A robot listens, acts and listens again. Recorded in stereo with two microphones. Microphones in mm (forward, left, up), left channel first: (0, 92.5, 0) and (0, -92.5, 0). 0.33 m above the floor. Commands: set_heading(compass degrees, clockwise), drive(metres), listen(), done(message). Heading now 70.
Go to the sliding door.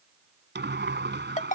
set_heading(135)
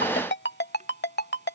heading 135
listen()
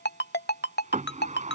set_heading(175)
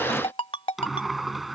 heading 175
drive(1.0)
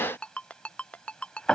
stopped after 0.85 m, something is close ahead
done("Arrived at the sliding door, straight ahead.")